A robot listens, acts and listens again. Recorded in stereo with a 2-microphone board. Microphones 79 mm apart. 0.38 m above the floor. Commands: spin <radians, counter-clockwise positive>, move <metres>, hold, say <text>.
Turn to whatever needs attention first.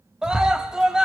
spin -0.52
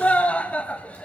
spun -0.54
spin 0.35
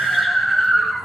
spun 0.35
say Found it: a scream, straight ahead, 1 to 2 m away.